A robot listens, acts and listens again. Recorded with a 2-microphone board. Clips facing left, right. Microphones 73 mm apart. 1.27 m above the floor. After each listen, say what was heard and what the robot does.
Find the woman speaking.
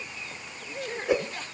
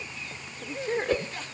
The woman speaking: about 25° right or 155° right. Turn 25° right.
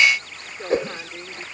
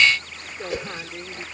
Found it: a woman speaking, straight ahead.